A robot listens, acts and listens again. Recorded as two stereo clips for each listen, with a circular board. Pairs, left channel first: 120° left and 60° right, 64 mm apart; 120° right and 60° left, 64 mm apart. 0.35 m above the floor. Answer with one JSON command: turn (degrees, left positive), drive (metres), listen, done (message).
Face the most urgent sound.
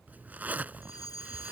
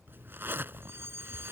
{"turn": 110}
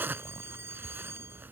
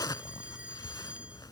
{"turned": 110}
{"turn": -15}
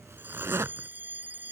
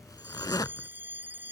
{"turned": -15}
{"done": "Facing the fire alarm."}